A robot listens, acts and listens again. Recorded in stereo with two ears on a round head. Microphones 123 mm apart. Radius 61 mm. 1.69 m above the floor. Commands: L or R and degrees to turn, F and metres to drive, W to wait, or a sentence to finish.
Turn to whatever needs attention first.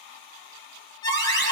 L35
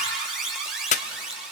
Found it: an alarm, straight ahead.